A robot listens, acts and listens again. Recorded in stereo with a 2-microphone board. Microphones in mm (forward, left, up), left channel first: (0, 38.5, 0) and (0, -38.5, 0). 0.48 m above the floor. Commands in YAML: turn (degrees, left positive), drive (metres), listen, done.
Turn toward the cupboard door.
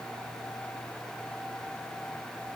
listen: true
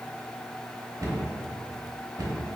turn: -50
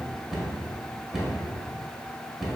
done: "Facing the cupboard door."